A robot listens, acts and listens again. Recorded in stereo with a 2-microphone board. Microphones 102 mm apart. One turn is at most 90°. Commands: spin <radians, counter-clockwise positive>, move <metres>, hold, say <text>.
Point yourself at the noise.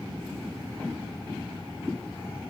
hold
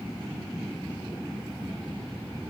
hold
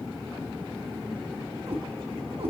spin -1.31
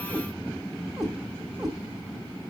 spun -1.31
say Facing the cat meowing, 1 to 2 m away.